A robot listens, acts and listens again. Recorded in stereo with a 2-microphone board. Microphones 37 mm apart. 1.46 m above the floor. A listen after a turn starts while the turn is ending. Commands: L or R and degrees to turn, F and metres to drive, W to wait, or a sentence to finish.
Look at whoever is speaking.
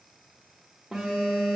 W
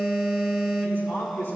L65
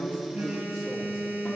W
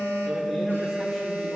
W
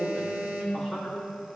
Facing the man speaking.